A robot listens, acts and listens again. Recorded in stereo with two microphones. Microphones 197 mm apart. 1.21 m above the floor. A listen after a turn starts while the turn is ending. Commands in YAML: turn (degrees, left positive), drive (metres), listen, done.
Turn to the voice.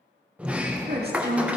turn: -55
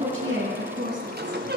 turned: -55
turn: -75
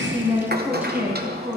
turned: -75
turn: -10
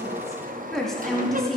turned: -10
done: "Found it: a woman speaking, straight ahead, 2 to 4 m away."